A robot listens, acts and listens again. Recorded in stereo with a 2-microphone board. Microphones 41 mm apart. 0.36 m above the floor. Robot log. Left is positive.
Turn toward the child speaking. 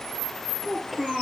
cmd yaw +30
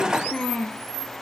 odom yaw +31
note: So it is at 155° left.
cmd yaw +155
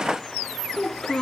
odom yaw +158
note: The child speaking is now 15° left.
cmd yaw +15
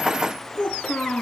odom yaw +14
note: The child speaking is now 15° left.
cmd yaw +15
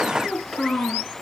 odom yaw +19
end: Facing the child speaking, 2 to 4 m away.